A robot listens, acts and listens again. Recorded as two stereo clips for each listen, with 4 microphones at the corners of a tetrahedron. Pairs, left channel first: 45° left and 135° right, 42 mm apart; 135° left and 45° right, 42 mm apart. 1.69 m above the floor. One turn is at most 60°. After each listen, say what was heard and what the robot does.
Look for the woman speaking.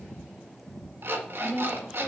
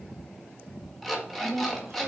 The woman speaking: 45° right. Turn 45° right.
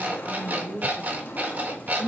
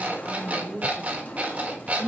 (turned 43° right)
The woman speaking is now 35° right. Turn 35° right.
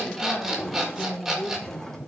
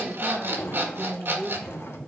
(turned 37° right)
The woman speaking is now 15° right. Turn 15° right.
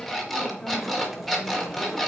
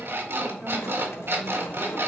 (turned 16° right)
Keep listening.
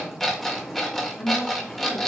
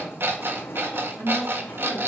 Facing the woman speaking.